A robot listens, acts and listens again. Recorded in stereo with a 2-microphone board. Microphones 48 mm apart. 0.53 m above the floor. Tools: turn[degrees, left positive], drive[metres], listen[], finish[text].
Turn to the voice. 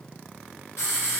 Action: listen[]
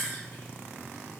Action: listen[]
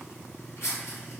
Action: finish[I can't make out anyone speaking to turn to.]